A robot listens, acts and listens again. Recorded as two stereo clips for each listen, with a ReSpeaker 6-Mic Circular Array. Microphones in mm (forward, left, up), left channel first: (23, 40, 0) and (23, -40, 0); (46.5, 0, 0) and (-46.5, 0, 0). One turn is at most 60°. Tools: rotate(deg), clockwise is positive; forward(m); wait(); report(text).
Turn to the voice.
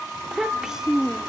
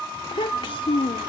report("Facing the child speaking.")